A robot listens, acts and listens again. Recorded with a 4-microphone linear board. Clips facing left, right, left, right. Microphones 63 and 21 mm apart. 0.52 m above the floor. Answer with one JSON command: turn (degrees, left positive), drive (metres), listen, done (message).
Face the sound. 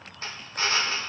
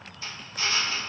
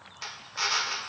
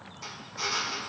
{"turn": 50}
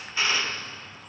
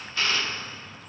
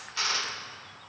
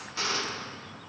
{"turn": 20}
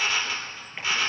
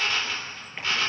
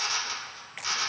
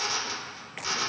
{"done": "Facing the drill."}